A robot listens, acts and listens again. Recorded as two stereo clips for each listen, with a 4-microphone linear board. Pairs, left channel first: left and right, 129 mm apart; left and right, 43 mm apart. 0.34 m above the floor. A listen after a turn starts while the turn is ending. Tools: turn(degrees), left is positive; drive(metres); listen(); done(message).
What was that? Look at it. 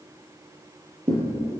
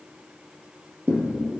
turn(degrees=-55)
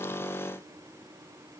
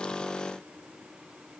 listen()
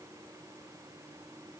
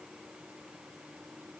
done("I heard a thud, but can't make it out now. It was about straight ahead or 70° right.")